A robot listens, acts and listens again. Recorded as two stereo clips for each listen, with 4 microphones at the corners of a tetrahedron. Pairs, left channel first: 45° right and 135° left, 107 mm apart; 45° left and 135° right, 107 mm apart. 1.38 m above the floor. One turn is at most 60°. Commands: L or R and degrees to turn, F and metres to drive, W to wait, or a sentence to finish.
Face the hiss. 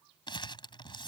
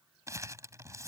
W
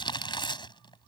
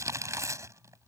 W
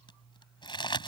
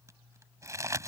I can't make out a hiss to turn to.